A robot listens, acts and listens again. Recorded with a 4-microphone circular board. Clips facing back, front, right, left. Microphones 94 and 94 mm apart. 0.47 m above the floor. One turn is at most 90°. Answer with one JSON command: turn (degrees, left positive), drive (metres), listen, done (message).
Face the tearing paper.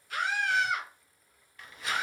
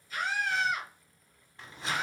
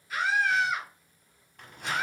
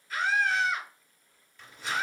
{"turn": -60}
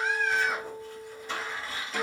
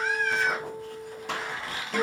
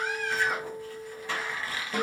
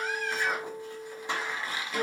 {"turn": 20}
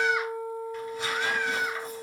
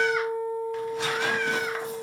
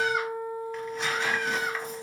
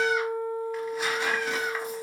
{"listen": true}
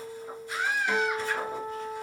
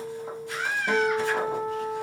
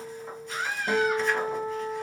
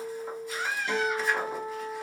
{"listen": true}
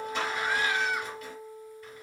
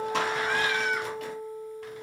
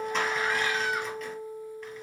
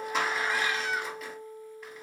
{"done": "Facing the tearing paper."}